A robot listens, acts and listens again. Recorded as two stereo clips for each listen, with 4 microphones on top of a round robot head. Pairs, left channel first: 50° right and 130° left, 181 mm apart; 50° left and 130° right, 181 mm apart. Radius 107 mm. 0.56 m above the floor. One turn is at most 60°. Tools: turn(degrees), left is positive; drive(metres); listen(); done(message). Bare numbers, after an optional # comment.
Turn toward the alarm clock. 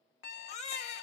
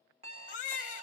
# The alarm clock: 75° right.
turn(-60)
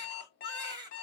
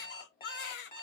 # The alarm clock is now 15° right.
turn(-15)
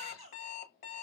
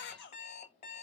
done("Facing the alarm clock.")